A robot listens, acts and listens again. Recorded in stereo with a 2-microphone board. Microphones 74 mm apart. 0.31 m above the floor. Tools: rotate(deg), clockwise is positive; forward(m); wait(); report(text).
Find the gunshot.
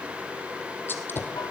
rotate(-30)
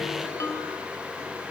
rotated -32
wait()
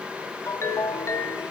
report("I heard a gunshot, but can't make it out now. It was about 5° right or 120° left.")